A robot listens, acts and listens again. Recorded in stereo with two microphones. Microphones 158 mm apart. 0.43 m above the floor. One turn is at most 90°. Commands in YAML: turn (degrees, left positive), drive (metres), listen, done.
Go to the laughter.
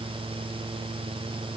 listen: true
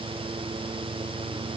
listen: true
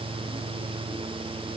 done: "I can't make out laughter to turn to."